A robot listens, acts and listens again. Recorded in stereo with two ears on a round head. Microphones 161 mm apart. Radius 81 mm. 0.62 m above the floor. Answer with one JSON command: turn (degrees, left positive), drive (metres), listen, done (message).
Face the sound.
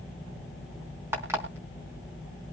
{"turn": -30}
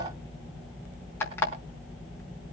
{"turn": 15}
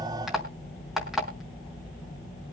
{"done": "Found it: an alarm clock, straight ahead, over 4 m away."}